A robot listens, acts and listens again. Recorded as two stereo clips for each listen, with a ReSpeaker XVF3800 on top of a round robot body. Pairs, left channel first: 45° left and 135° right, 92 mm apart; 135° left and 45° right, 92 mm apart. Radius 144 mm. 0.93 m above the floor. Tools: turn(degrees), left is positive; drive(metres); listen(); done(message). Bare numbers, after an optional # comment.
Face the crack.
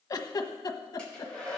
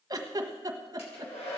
listen()
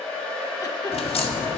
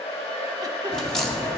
# The crack: 50° left.
turn(50)
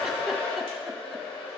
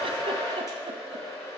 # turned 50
done("Facing where the crack came from. I can't hear it now.")